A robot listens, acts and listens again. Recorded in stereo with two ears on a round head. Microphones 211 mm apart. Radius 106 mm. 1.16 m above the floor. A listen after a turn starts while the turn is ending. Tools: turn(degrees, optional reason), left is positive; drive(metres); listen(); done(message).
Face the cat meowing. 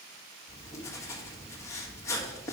listen()
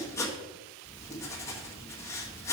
listen()
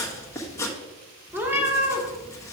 turn(degrees=-30)
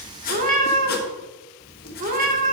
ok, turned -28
turn(degrees=-140, reason="So it is at 140° right.")
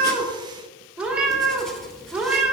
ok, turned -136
done("Found it: a cat meowing, straight ahead.")